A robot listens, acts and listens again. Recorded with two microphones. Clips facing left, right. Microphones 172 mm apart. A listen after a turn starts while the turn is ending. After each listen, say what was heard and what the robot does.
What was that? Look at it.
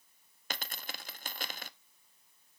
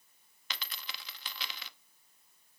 The dropped coin: about 45° left or 135° left. Turn 45° left.
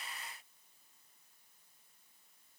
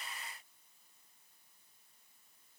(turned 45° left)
Keep listening.
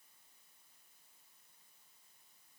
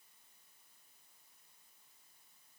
I heard a dropped coin, but can't make it out now. It was about straight ahead or 90° left.